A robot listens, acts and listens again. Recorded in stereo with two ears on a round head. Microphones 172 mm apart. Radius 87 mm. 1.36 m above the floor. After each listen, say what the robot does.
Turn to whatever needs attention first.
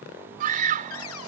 Turn 45° right.
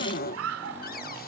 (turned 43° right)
Turn 95° right.
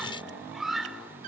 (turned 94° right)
Facing the scream.